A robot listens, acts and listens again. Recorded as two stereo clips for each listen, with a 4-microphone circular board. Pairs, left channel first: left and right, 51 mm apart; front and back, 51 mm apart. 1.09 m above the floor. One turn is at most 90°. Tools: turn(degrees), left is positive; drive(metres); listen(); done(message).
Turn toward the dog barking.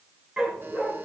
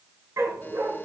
turn(degrees=-90)
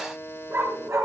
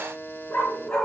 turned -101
turn(degrees=-55)
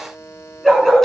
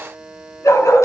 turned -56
done("Facing the dog barking, over 4 m away.")